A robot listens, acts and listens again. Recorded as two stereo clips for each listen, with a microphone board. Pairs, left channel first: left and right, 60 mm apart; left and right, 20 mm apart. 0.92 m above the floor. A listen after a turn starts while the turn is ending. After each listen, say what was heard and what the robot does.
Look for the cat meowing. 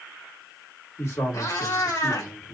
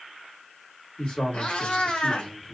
Turn 90° left.
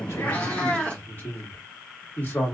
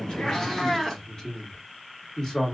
So it is at 25° left. Turn 25° left.
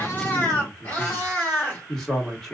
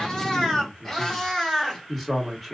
The cat meowing is now 25° left. Turn 25° left.
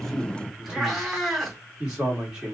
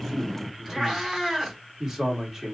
Facing the cat meowing.